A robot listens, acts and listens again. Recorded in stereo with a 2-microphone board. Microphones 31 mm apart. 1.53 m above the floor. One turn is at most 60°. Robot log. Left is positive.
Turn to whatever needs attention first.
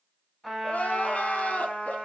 note: The crying: about 50° left or 130° left.
cmd yaw +50
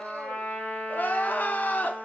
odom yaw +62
note: So it is at 65° left.
cmd yaw +60
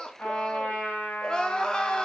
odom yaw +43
note: The crying is now 25° left.
cmd yaw +25
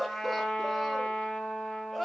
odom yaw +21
end: Found it: crying, straight ahead.